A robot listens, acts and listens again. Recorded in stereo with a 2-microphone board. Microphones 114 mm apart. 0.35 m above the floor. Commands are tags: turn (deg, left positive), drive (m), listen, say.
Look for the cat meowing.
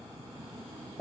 <listen/>
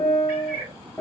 <turn deg="-20"/>
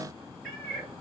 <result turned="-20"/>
<say>Facing the cat meowing, 1 to 2 m away.</say>